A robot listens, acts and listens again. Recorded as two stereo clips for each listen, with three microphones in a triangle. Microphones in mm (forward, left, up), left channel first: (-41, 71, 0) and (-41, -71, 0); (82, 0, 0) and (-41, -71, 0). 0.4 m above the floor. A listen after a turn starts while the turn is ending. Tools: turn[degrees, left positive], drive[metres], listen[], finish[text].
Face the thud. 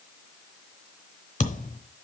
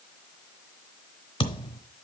Thought: The thud: 80° left.
Action: turn[80]
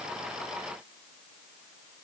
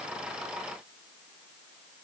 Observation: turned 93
Thought: Nothing new. It was at 15° right.
Action: turn[-15]
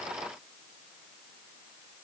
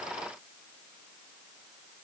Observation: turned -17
Action: finish[I heard a thud from this way, but can't make it out now.]